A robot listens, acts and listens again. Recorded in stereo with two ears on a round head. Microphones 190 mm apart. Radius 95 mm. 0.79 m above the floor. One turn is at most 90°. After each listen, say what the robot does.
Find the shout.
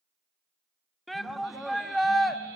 Turn 30° left.
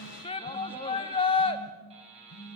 Turn 90° left.
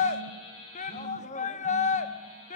Turn 40° left.
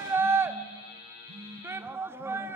Turn 15° right.
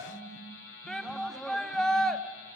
Found it: a shout, straight ahead.